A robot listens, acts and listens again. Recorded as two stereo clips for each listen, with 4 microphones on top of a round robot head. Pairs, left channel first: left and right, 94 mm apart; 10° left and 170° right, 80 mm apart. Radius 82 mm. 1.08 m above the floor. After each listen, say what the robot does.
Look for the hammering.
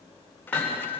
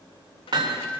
Turn 165° left.
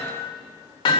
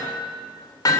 Turn 55° left.
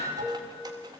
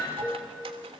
Keep listening.
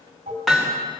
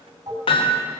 Found it: hammering, straight ahead.